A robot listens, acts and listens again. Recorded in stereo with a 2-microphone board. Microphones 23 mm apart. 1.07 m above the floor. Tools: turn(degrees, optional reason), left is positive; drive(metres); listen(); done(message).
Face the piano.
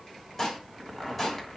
listen()
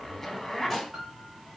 turn(degrees=-35, reason="The piano: about 35° right or 145° right.")
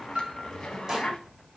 turn(degrees=-115, reason="So it is at 115° right.")
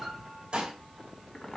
listen()
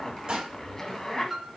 done("Facing the piano.")